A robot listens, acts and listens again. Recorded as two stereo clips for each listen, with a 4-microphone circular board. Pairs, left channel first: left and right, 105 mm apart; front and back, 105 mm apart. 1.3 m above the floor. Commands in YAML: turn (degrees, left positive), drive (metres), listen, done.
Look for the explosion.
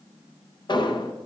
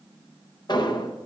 turn: 45
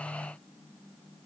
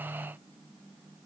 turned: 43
done: "Facing where the explosion came from. I can't hear it now."